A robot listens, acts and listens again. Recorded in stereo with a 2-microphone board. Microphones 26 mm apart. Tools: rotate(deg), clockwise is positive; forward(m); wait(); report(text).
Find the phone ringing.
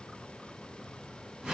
wait()
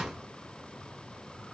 wait()
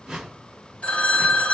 rotate(-45)
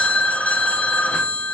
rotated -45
rotate(-85)
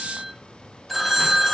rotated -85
report("Found it: a phone ringing, straight ahead, under 1 m away.")